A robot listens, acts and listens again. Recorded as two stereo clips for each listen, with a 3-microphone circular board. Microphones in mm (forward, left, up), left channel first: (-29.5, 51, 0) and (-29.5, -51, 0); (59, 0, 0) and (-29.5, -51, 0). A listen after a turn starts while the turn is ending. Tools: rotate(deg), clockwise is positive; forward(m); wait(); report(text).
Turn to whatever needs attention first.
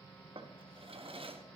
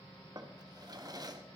wait()
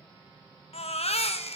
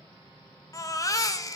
rotate(-85)
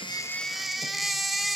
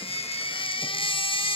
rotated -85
report("Found it: a baby crying, straight ahead, under 1 m away.")